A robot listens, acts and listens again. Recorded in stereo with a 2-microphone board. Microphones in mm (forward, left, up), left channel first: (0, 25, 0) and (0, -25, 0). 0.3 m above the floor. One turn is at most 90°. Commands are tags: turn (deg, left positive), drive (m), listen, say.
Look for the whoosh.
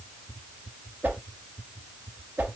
<turn deg="-40"/>
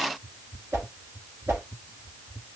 <turn deg="-90"/>
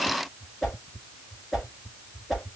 <say>Found it: a whoosh, straight ahead.</say>